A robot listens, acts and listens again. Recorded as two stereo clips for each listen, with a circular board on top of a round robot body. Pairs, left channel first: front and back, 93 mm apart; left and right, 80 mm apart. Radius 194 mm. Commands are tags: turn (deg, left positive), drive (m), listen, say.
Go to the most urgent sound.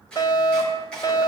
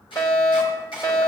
<turn deg="45"/>
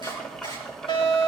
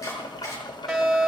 <drive m="1.0"/>
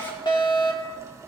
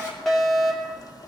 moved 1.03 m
<drive m="1.0"/>
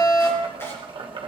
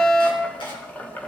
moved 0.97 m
<turn deg="20"/>
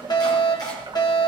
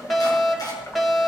<drive m="1.0"/>
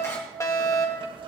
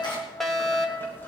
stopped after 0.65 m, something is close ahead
<say>I am next to the fire alarm.</say>